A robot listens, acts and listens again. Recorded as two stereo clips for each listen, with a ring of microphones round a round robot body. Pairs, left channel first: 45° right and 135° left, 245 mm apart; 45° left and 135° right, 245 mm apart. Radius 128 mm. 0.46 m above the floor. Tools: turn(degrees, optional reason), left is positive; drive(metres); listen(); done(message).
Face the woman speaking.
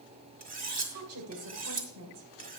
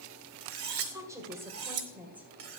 turn(degrees=140, reason="The woman speaking: 140° left.")
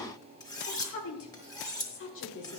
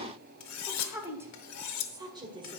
turn(degrees=-65, reason="The woman speaking is now 65° right.")
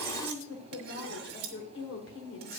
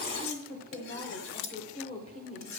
turn(degrees=-15, reason="The woman speaking is now 15° right.")
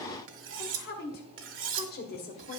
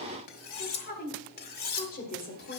done("Facing the woman speaking, 2 to 4 m away.")